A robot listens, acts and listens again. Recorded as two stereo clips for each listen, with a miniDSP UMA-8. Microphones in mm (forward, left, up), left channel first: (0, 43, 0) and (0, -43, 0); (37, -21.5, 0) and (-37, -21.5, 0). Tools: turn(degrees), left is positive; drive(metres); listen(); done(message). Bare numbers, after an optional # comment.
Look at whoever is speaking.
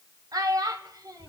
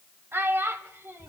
# The child speaking: 125° right.
turn(-125)
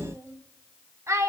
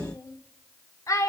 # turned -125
# The child speaking is now 40° right.
turn(-40)
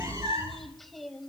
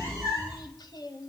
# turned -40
done("Found it: a child speaking, straight ahead.")